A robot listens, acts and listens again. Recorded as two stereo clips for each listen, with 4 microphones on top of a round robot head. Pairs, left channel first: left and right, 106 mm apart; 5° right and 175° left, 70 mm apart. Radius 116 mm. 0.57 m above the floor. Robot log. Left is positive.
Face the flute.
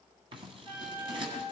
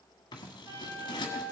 note: The flute: 145° right.
cmd yaw -145
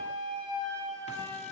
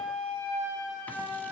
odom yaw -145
note: The flute is now 40° right.
cmd yaw -40
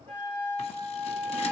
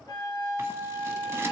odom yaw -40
note: The flute is now 15° left.
cmd yaw +15
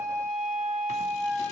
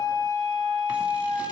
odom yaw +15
end: Facing the flute.